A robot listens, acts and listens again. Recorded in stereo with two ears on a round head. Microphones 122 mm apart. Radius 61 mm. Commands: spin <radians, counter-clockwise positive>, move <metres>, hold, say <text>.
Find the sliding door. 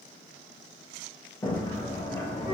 spin 0.35
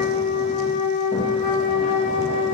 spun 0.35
hold
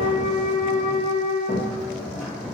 say Found it: a sliding door, straight ahead, under 1 m away.